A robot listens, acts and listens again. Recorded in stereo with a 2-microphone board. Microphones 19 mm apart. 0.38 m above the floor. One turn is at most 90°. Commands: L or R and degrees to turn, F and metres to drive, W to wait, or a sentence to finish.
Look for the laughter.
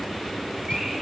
W
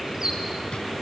W
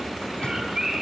I can't make out laughter, only a bird.